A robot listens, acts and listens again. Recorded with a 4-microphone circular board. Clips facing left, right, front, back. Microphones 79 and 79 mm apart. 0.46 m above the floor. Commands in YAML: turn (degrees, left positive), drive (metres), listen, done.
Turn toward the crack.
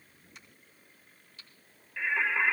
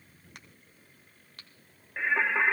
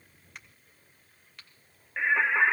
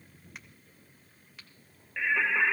turn: -90
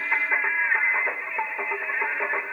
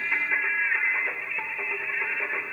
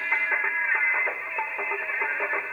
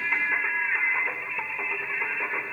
done: "I heard a crack from this way, but can't make it out now."